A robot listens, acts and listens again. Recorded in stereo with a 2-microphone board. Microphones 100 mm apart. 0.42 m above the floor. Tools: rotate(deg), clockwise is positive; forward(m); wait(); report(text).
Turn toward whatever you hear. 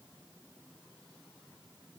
wait()
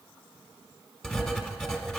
rotate(-30)
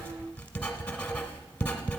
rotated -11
rotate(-165)
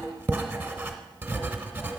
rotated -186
rotate(20)
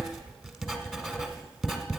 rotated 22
report("Facing the writing.")